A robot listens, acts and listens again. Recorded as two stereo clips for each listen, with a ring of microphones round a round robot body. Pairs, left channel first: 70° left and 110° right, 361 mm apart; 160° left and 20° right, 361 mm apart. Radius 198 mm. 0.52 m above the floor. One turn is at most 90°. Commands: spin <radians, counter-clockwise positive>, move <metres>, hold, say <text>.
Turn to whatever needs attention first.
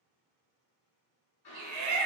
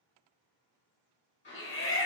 spin -1.57
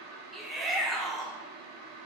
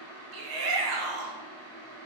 spin -0.35
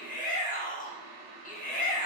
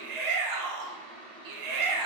say Facing the shout.